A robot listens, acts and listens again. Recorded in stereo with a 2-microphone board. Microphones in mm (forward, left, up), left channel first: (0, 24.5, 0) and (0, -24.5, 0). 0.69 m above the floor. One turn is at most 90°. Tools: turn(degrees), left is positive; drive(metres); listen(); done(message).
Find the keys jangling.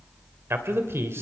listen()
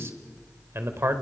listen()
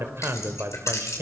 turn(degrees=70)
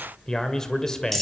done("Found it: keys jangling, straight ahead, 2 to 4 m away.")